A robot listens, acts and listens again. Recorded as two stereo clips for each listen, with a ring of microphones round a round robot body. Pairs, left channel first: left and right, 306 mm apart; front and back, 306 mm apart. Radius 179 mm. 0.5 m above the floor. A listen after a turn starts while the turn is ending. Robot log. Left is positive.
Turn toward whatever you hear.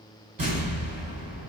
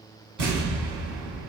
note: The explosion: 150° right.
cmd yaw -150
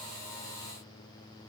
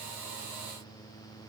end: I heard an explosion from this way, but can't make it out now.